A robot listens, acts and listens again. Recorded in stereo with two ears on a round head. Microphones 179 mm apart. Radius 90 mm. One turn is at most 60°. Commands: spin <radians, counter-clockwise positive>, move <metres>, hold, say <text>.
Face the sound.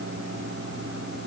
hold
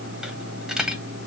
spin -0.52
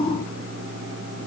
hold
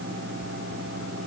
say I heard a dropped coin, but can't make it out now. It was about 25° left or 145° right.